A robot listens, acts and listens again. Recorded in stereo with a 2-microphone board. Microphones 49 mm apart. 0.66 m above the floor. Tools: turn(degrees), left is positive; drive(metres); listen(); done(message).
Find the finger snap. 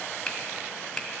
turn(degrees=30)
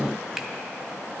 listen()
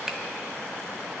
listen()
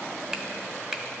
turn(degrees=-15)
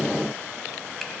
listen()
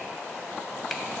listen()
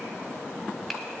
done("I heard a finger snap from this way, but can't make it out now.")